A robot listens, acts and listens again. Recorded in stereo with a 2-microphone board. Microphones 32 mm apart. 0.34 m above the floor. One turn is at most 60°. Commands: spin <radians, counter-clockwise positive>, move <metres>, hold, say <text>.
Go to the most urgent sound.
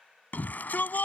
spin 1.05
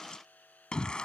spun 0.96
spin 0.52
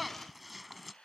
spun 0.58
move 1.0
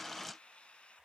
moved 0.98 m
hold
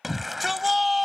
move 1.0
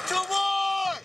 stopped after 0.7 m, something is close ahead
say I am next to the shout.